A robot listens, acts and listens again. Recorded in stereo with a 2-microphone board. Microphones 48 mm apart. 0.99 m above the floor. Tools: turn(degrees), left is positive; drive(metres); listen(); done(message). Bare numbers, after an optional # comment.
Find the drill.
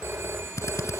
turn(90)
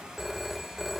listen()
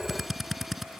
done("Facing the drill.")